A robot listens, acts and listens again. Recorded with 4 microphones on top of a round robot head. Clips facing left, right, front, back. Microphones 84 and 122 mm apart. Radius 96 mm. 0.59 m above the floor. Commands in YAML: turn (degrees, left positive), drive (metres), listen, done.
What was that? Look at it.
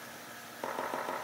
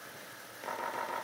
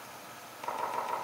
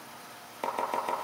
turn: 150
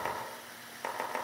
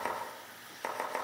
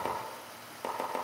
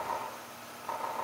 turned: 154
done: "Facing the chopping."